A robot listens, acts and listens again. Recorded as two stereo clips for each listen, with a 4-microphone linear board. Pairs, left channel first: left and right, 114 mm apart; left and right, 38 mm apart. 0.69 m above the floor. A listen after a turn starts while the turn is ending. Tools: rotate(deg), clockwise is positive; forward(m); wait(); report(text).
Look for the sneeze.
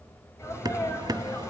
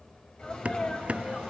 rotate(-25)
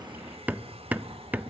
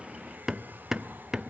wait()
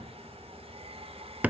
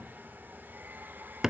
report("I heard a sneeze, but can't make it out now. It was about straight ahead or 130° left.")